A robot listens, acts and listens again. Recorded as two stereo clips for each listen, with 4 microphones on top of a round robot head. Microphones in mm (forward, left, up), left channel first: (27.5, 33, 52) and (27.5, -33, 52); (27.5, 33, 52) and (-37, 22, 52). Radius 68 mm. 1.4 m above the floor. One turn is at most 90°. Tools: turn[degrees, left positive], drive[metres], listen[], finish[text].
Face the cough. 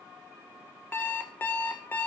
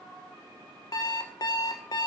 Action: listen[]
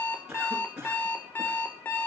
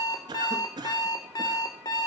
Thought: The cough: 170° right.
Action: turn[-90]
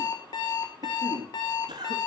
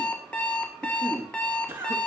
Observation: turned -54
Thought: The cough is now 120° right.
Action: turn[-90]
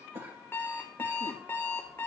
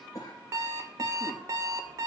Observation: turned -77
Thought: The cough is now 45° right.
Action: turn[-45]
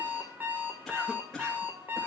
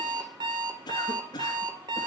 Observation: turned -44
Action: finish[Found it: a cough, straight ahead.]